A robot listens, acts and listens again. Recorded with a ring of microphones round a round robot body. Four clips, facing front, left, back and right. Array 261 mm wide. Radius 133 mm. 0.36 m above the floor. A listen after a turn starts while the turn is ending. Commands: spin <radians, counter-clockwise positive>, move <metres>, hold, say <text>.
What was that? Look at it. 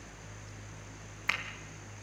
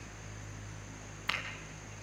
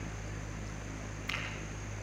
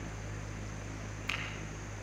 spin 0.61
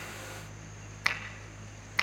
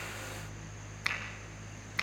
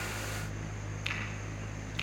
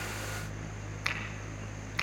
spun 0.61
say Facing the finger snap.